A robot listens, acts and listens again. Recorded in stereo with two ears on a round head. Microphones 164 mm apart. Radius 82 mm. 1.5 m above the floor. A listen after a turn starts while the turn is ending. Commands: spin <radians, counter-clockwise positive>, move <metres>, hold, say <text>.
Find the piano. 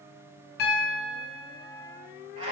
spin 1.05
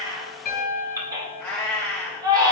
spin 0.87
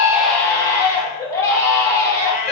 hold
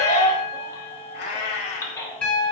say Found it: a piano, straight ahead.